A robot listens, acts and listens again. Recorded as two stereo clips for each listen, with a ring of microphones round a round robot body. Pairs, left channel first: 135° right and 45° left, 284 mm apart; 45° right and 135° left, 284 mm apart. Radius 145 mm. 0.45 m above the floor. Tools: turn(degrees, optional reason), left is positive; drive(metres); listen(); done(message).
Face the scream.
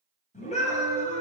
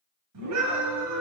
turn(degrees=160, reason="The scream: 160° left.")
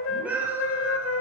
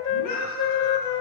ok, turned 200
turn(degrees=-40, reason="The scream is now 40° right.")
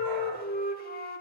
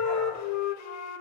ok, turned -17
turn(degrees=-25, reason="Nothing new. It was at 25° right.")
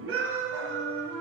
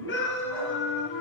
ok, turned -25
done("Found it: a scream, straight ahead.")